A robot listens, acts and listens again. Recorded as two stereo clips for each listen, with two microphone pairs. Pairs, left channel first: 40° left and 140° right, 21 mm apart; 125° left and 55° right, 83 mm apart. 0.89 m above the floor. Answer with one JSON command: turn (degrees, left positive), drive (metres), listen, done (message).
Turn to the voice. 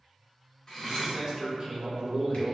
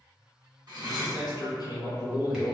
{"turn": 155}
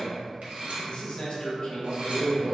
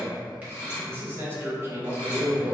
{"done": "Facing the man speaking, under 1 m away."}